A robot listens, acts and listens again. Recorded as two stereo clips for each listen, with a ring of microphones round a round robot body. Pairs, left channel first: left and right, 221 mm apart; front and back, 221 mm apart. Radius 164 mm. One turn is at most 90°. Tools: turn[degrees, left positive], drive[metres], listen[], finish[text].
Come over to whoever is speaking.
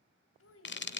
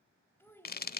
Thought: The child speaking: 80° left.
Action: turn[80]
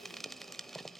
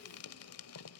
Action: listen[]
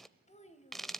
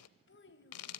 Thought: The child speaking is now 30° left.
Action: turn[30]
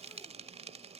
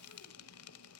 Action: listen[]
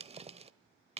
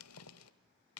Action: listen[]
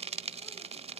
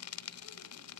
Action: finish[Facing where the child speaking came from. I can't hear it now. I did not reach it.]